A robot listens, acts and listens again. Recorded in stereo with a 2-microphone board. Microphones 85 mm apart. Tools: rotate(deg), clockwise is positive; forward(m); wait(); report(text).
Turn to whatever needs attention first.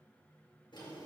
wait()
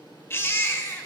rotate(-30)
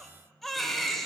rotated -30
report("Facing the baby crying.")